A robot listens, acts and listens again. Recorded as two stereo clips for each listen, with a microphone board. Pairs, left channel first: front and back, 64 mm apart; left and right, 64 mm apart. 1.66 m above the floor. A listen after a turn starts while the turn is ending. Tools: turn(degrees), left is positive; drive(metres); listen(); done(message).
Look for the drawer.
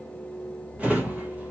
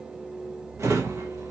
turn(degrees=-120)
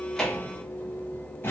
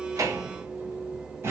turn(degrees=-50)
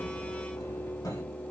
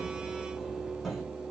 done("Found it: a drawer, straight ahead.")